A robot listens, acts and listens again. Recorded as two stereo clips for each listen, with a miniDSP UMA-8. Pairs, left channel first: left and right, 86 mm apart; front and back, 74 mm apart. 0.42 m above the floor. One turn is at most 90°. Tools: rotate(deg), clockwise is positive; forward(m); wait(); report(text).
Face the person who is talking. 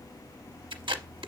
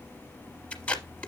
wait()
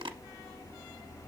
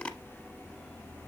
wait()
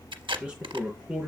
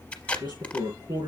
rotate(90)
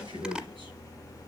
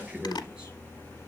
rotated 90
rotate(90)
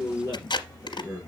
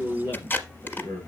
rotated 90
rotate(35)
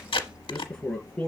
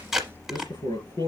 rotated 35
report("Found it: a man speaking, straight ahead.")